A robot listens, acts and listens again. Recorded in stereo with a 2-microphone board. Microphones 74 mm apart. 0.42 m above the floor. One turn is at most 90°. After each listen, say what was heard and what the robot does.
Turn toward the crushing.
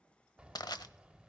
The crushing: about 70° left or 110° left. Turn 70° left.
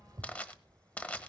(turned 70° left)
So it is at 20° left. Turn 20° left.
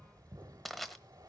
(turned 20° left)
Facing the crushing.